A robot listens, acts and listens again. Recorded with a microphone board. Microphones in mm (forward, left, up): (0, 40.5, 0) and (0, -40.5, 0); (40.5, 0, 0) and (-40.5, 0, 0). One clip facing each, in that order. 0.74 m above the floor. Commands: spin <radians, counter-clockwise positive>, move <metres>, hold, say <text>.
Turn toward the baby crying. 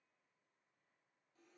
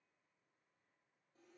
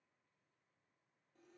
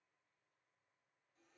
hold
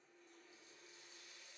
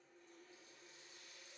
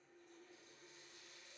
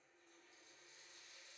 hold
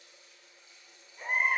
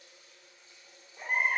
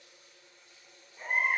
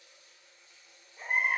spin -2.01
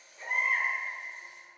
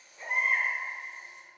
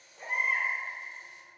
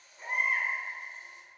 spin -0.26
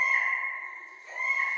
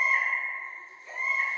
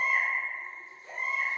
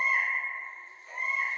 say Found it: a baby crying, straight ahead.